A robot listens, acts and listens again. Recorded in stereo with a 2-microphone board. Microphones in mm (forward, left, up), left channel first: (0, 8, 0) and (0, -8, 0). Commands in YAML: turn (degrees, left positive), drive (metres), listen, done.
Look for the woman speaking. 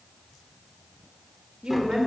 turn: -65
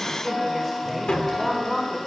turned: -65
turn: 10
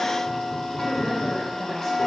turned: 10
turn: 10
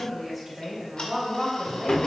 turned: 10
done: "Facing the woman speaking, 2 to 4 m away."